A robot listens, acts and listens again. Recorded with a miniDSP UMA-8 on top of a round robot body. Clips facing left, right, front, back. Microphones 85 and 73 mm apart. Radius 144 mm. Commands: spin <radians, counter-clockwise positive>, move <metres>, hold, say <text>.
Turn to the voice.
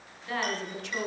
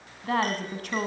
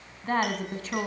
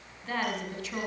spin -0.87
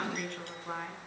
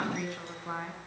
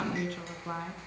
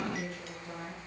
spin -0.17
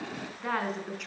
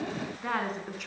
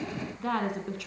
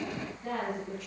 say Facing the woman speaking.